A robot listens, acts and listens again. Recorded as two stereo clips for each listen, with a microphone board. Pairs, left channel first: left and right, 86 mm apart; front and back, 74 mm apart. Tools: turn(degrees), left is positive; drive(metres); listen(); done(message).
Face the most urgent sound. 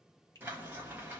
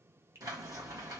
listen()
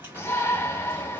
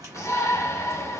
turn(degrees=35)
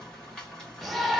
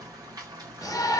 done("Facing the shout, under 1 m away.")